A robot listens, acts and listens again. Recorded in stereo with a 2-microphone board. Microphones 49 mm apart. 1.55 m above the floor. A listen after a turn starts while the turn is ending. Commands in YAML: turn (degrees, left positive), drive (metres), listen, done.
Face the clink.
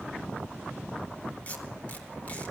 listen: true
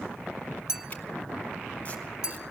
turn: -30
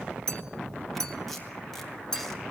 turn: 15
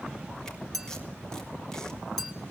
done: "Facing the clink."